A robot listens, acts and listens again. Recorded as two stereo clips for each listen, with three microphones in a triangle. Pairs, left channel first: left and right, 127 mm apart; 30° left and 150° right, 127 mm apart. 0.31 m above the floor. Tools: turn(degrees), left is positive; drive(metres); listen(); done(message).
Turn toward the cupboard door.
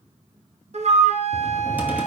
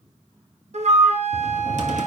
turn(degrees=-170)
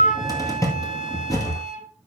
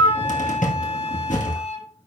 turn(degrees=25)
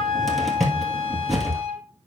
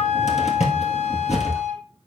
done("Facing the cupboard door, 2 to 4 m away.")